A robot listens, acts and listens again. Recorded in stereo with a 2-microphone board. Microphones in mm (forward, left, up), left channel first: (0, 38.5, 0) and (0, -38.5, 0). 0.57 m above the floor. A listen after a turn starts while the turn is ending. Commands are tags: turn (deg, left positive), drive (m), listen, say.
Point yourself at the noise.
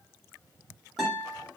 <turn deg="30"/>
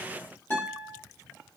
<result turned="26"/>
<turn deg="155"/>
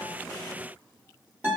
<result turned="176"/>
<turn deg="-25"/>
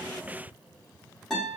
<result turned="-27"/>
<say>Found it: a guitar, straight ahead.</say>